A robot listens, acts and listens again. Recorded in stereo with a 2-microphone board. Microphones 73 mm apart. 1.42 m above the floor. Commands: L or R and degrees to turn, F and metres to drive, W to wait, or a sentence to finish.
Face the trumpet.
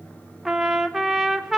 R30
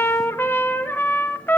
L30
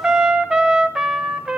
R10
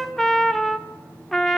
Facing the trumpet, under 1 m away.